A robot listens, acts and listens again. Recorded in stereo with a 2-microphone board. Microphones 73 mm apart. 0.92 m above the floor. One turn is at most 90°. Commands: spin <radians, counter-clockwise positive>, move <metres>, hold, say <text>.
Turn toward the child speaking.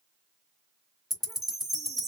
hold
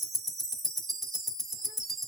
hold
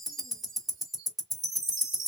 say I can't make out a child speaking to turn to.